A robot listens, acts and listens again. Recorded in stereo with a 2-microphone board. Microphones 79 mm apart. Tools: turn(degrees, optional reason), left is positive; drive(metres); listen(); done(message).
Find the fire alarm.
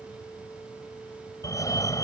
turn(degrees=45, reason="The fire alarm: about 45° left or 135° left.")
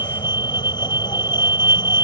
turn(degrees=90, reason="So it is at 90° left.")
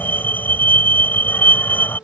turn(degrees=25, reason="The fire alarm is now 25° left.")
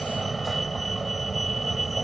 done("Facing the fire alarm.")